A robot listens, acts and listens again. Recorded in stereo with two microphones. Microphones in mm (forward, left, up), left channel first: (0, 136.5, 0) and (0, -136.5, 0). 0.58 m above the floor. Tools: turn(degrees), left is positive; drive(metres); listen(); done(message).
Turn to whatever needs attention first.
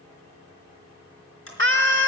turn(degrees=-40)
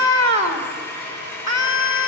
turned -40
turn(degrees=-90)
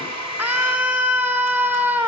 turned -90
done("Found it: a scream, straight ahead.")